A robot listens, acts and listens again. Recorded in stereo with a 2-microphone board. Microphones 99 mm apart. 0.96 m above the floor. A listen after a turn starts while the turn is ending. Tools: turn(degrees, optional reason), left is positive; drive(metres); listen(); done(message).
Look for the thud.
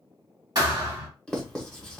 turn(degrees=-45, reason="The thud: about 45° right or 135° right.")
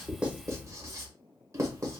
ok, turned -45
listen()
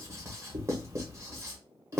done("I heard a thud, but can't make it out now. It was about straight ahead or 90° right.")